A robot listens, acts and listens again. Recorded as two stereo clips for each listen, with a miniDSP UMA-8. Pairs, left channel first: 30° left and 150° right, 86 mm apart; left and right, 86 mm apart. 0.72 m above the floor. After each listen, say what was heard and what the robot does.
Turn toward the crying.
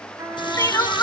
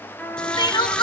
The crying: 80° left. Turn 80° left.
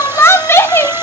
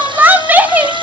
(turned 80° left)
The crying is now 25° right. Turn 25° right.
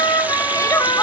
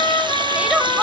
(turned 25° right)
The crying is now 15° right. Turn 15° right.
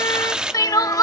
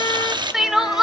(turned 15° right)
Facing the crying.